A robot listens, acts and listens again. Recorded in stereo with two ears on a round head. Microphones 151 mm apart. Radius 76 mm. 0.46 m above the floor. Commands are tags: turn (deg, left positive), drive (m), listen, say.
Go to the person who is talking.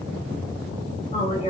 <turn deg="35"/>
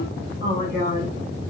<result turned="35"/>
<turn deg="105"/>
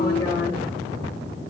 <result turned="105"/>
<turn deg="25"/>
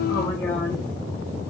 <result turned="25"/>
<turn deg="15"/>
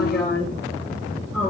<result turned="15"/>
<drive m="1.0"/>
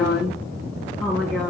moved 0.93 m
<drive m="1.0"/>
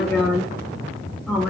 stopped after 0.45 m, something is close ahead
<say>I am next to the woman speaking.</say>